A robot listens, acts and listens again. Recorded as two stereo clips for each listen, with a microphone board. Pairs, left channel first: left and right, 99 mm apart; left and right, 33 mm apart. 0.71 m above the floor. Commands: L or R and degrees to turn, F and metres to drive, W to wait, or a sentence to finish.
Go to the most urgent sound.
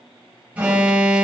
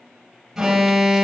R30
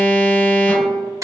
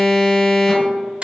L15
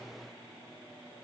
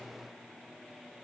W
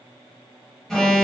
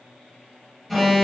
F1.0
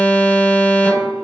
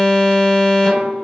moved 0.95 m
L15
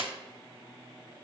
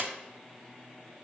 W
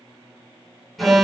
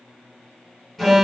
F1.0
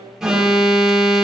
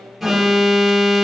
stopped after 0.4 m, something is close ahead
Arrived at the alarm, straight ahead.